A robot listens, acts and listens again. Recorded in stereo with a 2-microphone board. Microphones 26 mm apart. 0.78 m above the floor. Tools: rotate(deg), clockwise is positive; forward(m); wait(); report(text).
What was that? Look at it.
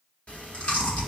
rotate(-55)
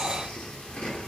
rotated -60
rotate(-65)
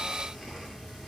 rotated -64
report("Facing the chewing.")